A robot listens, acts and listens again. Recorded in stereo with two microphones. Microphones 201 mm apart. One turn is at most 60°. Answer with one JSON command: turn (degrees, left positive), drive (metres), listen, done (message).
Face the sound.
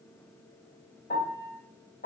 {"turn": 40}
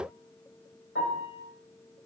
{"turn": 60}
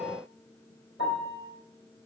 {"turn": 60}
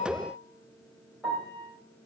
{"done": "Facing the piano, 2 to 4 m away."}